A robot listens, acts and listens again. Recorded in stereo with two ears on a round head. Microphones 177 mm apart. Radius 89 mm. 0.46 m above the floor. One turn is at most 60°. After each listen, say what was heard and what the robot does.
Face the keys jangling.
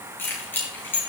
Turn 30° left.
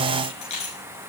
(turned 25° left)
So it is at 145° left. Turn 60° left.
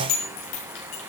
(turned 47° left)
The keys jangling is now 100° left. Turn 60° left.
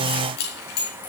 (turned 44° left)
The keys jangling is now 55° left. Turn 55° left.
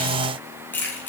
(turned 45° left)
The keys jangling is now 10° left. Turn 10° left.
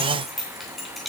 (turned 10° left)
Facing the keys jangling, 2 to 4 m away.